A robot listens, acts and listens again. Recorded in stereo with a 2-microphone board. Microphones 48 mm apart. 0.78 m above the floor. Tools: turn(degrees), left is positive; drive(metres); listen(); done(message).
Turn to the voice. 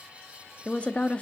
turn(degrees=25)
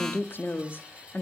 turn(degrees=125)
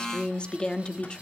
turn(degrees=25)
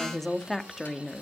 done("Found it: a woman speaking, straight ahead, 1 to 2 m away.")